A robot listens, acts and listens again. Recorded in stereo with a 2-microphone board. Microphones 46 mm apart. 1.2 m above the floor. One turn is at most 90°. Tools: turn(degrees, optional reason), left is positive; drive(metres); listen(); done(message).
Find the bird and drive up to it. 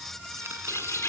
turn(degrees=90)
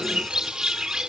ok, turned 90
turn(degrees=-15, reason="So it is at 15° right.")
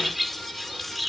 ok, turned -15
drive(metres=1.0)
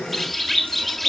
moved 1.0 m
drive(metres=1.0)
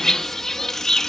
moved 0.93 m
turn(degrees=10, reason="The bird is now 10° left.")
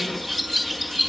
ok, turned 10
drive(metres=1.0)
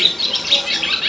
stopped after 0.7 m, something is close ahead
done("Arrived at the bird, straight ahead.")